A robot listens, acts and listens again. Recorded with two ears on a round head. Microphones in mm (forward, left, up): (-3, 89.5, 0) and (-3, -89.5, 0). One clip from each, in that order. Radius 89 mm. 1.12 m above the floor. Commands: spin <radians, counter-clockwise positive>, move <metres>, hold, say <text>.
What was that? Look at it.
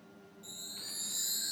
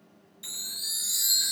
spin -1.31
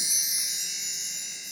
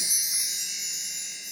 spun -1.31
say Facing the chime.